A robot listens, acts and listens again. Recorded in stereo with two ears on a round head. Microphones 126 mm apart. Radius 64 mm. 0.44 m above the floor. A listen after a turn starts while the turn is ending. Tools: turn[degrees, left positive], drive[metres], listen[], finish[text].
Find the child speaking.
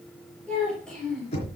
Action: turn[30]
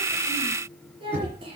Thought: So it is at 40° right.
Action: turn[-40]
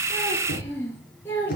Thought: The child speaking is now 15° left.
Action: turn[15]
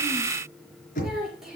Action: finish[Found it: a child speaking, straight ahead, over 4 m away.]